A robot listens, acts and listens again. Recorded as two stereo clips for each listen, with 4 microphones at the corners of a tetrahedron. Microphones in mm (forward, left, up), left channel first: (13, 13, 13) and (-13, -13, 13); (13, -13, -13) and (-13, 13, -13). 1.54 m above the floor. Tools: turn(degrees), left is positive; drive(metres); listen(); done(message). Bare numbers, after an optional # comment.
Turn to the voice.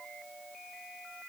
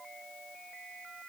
listen()
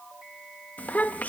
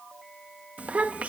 # The child speaking: 85° left.
turn(85)
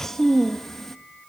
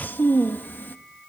# The child speaking is now 35° right.
turn(-35)
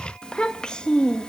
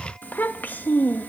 # The child speaking is now 20° right.
turn(-20)
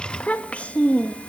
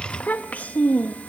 done("Facing the child speaking.")